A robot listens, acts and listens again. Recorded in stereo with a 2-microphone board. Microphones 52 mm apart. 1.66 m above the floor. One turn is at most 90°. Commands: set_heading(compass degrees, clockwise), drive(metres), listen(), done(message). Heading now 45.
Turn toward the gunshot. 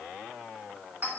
listen()
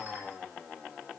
listen()
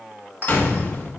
set_heading(20)
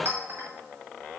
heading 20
listen()
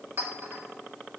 done("I heard a gunshot, but can't make it out now. It was about straight ahead or 130° left.")